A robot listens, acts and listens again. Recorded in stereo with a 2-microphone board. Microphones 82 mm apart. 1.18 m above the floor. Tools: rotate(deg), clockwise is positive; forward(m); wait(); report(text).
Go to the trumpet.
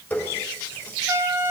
rotate(25)
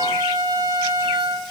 rotate(130)
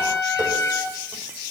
rotate(-30)
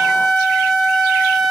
forward(1.0)
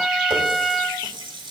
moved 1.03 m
forward(1.0)
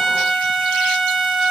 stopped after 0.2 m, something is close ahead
report("Arrived at the trumpet, straight ahead.")